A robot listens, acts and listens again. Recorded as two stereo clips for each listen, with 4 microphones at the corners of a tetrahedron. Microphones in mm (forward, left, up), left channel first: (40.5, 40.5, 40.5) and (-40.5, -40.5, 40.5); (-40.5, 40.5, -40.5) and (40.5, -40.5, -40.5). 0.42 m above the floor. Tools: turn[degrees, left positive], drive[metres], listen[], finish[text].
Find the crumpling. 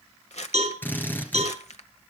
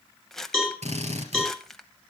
Thought: The crumpling: 50° left.
Action: turn[50]
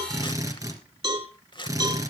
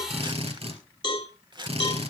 Action: finish[Found it: crumpling, straight ahead, 1 to 2 m away.]